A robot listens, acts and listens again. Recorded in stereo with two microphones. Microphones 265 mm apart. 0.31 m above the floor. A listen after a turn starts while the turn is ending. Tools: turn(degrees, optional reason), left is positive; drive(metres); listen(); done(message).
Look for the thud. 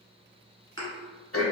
turn(degrees=-50, reason="The thud: about 50° right or 130° right.")
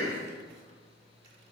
listen()
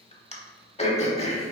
done("I heard a thud, but can't make it out now. It was about straight ahead or 80° right.")